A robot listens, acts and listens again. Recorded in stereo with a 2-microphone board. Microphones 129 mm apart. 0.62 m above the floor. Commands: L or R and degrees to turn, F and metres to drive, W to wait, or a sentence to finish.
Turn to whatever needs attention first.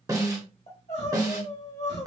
L60
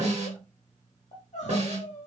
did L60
L60
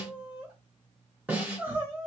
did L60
R15
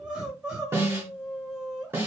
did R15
R10
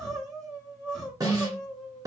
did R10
Facing the crying.